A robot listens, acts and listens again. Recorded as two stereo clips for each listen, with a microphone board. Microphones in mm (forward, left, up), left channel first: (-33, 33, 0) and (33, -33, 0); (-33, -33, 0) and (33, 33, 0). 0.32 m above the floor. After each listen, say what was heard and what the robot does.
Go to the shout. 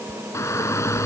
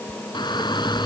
The shout: 170° right. Turn 170° right.
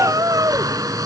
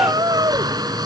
Drive 1.0 m forward.
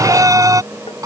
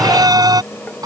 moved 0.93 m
Drive 1.0 m forward.
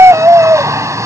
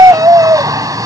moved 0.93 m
Drive 1.0 m forward.
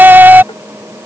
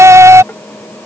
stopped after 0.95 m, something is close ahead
The shout is now 10° left. Turn 10° left.
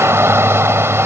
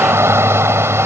I am next to the shout.